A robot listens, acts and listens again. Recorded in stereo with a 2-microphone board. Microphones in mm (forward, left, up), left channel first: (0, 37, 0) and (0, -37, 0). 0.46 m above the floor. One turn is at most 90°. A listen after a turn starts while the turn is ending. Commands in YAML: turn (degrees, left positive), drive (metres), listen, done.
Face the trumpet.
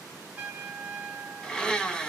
turn: -30
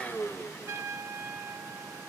turn: -90
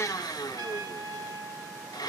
turn: -75
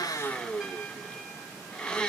listen: true
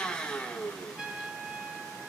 turn: -10
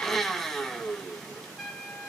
done: "Found it: a trumpet, straight ahead."